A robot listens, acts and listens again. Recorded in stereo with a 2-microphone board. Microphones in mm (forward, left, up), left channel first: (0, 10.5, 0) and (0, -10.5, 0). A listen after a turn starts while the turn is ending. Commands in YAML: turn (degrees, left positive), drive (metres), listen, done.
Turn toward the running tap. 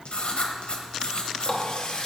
turn: 40
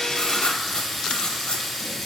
done: "Found it: a running tap, straight ahead, under 1 m away."